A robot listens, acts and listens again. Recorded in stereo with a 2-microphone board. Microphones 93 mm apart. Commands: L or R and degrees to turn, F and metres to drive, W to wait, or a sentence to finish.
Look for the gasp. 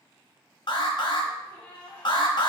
L15
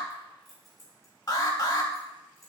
W
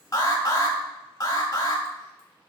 I heard a gasp, but can't make it out now. It was about straight ahead or 150° left.